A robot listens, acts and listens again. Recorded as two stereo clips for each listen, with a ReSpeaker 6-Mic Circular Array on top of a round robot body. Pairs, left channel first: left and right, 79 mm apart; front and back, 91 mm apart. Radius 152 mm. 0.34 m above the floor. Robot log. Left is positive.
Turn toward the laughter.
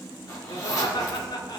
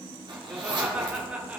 note: The laughter: 105° left.
cmd yaw +105
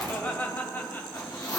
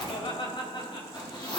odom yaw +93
note: The laughter is now 25° left.
cmd yaw +25
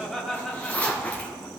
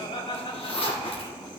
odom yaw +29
end: Found it: laughter, straight ahead, 2 to 4 m away.